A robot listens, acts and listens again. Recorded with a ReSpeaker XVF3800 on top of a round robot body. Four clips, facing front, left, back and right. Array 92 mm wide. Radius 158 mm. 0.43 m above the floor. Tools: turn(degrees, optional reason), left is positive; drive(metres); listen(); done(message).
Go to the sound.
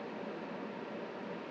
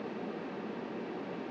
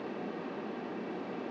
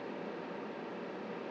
listen()
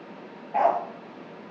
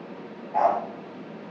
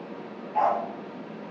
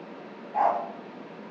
turn(degrees=20, reason="The dog barking: 20° left.")
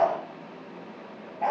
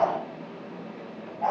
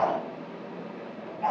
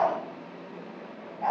turn(degrees=10, reason="The dog barking is now 10° left.")
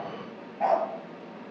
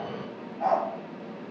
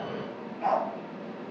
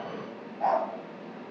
drive(metres=1.0)
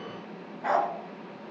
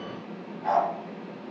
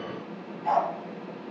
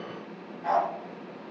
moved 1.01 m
drive(metres=1.0)
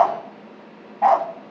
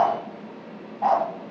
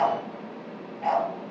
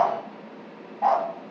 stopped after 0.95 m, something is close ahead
done("Arrived at the dog barking, straight ahead.")